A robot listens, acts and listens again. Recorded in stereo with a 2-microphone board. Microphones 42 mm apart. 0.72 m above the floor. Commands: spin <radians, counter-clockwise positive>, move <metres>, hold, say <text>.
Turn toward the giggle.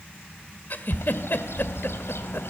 spin 0.96
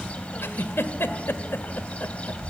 spin 1.22
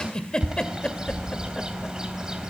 spin 0.35
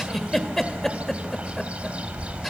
say Found it: a giggle, straight ahead, 2 to 4 m away.